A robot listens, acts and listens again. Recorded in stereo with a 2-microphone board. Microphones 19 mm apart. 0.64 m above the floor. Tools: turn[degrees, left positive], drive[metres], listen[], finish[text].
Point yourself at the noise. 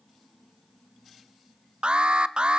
Thought: The alarm: about 60° right or 120° right.
Action: turn[-60]
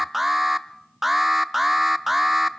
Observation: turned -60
Thought: So it is at 10° right.
Action: turn[-10]
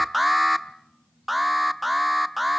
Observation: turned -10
Action: finish[Found it: an alarm, straight ahead.]